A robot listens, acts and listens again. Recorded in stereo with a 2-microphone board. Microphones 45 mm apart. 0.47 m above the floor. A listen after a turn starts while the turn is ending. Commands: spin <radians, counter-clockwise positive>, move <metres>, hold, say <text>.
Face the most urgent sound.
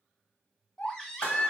spin 0.26
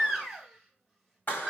say Found it: a baby crying, straight ahead, 1 to 2 m away.